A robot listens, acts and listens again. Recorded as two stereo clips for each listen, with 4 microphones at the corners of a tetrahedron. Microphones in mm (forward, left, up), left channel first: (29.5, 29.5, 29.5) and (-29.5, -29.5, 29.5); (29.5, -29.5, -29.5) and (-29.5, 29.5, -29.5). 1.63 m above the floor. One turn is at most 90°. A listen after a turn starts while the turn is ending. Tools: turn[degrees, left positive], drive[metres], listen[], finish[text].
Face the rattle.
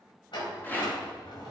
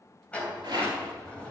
Thought: The rattle: 110° left.
Action: turn[90]
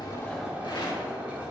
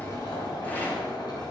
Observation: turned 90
Thought: Nothing new. It was at 20° left.
Action: turn[20]
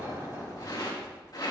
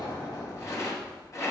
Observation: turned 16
Action: finish[Facing the rattle.]